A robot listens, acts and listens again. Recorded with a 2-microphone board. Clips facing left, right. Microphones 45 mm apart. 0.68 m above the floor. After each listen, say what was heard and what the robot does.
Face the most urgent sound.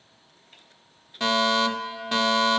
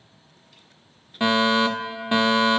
The fire alarm: about 20° right or 160° right. Turn 20° right.
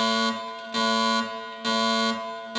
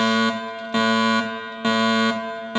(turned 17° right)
So it is at 150° right. Turn 150° right.
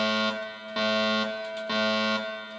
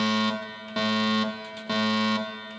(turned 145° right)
Facing the fire alarm.